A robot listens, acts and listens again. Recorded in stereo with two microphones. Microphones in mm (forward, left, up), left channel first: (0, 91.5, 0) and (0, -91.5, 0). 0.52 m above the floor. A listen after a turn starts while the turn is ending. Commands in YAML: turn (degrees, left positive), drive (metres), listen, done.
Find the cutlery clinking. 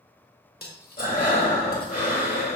turn: 60
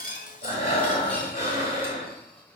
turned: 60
listen: true
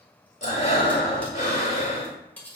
turn: 10
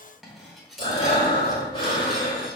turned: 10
done: "Found it: cutlery clinking, straight ahead."